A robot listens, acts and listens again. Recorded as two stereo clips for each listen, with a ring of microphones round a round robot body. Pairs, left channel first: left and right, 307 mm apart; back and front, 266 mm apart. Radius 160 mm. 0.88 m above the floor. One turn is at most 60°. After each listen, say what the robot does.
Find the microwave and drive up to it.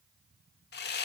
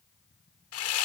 Keep listening.
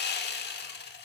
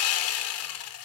Keep listening.
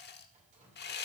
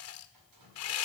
I can't make out a microwave to turn to.